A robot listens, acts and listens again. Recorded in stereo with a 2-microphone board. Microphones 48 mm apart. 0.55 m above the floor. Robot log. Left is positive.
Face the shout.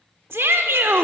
note: The shout: about 55° right or 125° right.
cmd yaw -55
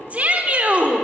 note: So it is at 35° right.
cmd yaw -35
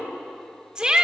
note: The shout is now 20° right.
cmd yaw -20
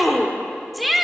end: Facing the shout.